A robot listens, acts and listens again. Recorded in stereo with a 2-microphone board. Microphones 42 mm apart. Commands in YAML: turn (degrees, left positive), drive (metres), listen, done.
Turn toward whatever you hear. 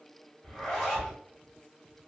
turn: 30
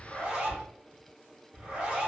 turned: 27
turn: -20
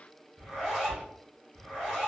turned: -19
done: "Facing the zipper."